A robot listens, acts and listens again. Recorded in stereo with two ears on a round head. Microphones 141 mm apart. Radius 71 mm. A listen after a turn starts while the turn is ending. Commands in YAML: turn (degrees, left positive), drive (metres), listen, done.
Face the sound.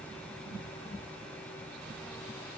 listen: true
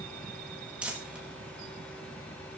turn: -30
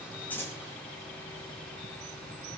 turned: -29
listen: true
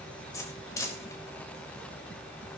turn: 20
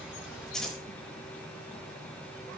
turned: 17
done: "Found it: crumpling, straight ahead."